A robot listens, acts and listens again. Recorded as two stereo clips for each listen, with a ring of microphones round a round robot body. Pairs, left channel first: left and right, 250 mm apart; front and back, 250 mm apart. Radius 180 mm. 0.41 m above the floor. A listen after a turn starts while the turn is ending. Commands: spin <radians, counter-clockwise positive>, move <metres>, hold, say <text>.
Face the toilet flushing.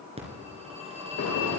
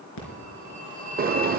hold
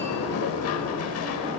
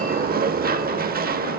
hold
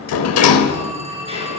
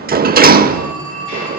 say I can't make out a toilet flushing to turn to.